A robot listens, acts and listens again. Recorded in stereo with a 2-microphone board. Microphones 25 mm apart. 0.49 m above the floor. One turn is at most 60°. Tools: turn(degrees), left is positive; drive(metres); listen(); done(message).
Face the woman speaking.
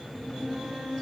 listen()
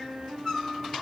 listen()
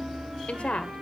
turn(degrees=60)
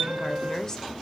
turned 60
turn(degrees=30)
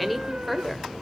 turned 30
done("Found it: a woman speaking, straight ahead.")